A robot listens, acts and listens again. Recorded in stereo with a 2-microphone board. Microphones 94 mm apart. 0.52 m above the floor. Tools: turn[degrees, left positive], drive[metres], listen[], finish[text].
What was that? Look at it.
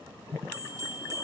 Thought: The bell: about 40° right or 140° right.
Action: turn[-40]
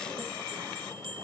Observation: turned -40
Thought: So it is at 100° right.
Action: turn[-100]
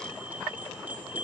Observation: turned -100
Thought: The bell is now 20° right.
Action: turn[-20]
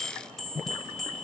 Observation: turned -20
Action: finish[Facing the bell.]